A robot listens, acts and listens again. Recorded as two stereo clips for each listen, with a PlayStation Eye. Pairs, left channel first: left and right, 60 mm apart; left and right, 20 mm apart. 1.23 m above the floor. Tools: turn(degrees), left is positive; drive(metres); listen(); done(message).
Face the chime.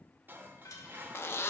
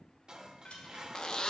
turn(degrees=75)
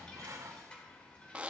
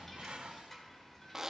turn(degrees=20)
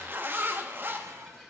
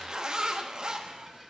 done("Facing the chime.")